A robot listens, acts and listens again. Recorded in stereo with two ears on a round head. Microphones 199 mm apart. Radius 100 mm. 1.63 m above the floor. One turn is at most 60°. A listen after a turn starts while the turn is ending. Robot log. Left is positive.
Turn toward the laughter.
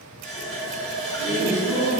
note: The laughter: about 35° left or 145° left.
cmd yaw +35
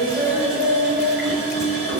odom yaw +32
end: Found it: laughter, straight ahead.